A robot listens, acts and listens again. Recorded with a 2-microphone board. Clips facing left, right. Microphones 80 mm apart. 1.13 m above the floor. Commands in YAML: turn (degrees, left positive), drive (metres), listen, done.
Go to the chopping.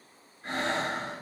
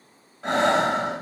listen: true
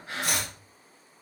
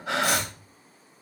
turn: 65
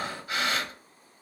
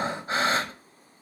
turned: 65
listen: true
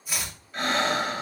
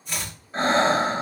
drive: 1.0
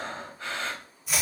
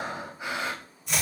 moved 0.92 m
drive: 1.0
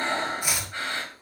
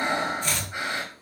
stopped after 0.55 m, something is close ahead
turn: 10
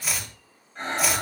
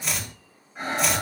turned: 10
done: "Arrived at the chopping, straight ahead."